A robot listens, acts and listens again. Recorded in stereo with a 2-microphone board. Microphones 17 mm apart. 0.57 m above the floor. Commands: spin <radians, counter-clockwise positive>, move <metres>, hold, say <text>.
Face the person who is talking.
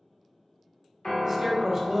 spin -0.70
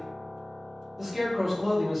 spin -0.17
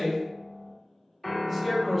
say Facing the man speaking.